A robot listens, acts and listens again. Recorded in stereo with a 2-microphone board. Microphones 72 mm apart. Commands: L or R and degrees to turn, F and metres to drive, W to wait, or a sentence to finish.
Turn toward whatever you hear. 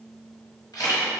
L90
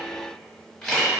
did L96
Facing the camera shutter.